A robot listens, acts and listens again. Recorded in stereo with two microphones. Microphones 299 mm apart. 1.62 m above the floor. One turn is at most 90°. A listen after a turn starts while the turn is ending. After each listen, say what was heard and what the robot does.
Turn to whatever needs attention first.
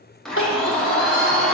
The crying: about 45° left or 135° left. Turn 45° left.
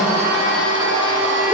Keep listening.
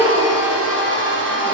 So it is at 10° left. Turn 10° left.
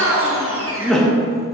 Facing the crying, 1 to 2 m away.